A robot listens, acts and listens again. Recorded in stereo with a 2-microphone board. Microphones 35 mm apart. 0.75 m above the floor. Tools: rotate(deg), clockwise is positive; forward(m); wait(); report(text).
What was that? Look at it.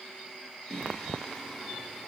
rotate(-30)
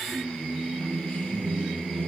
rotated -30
rotate(-160)
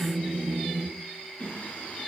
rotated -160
rotate(-45)
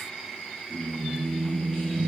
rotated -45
rotate(-30)
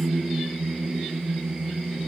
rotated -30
rotate(15)
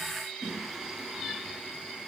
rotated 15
report("Facing the singing, 2 to 4 m away.")